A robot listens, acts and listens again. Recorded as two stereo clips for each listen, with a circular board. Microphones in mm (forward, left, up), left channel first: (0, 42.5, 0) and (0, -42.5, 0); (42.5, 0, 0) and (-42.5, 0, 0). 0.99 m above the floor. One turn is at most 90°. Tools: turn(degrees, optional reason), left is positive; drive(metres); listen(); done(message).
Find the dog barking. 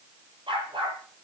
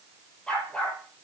turn(degrees=-75, reason="The dog barking: 75° right.")
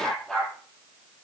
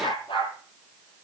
done("Found it: a dog barking, straight ahead, over 4 m away.")